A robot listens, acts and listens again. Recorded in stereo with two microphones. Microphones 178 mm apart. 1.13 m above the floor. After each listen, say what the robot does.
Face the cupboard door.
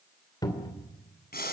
Turn 20° left.
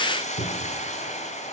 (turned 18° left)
Turn 140° left.
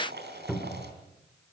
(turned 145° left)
Facing the cupboard door.